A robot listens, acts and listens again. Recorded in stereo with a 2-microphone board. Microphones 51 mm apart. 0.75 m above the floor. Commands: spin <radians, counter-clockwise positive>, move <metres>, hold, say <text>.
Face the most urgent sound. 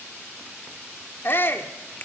spin 0.87
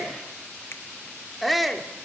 say Facing the shout.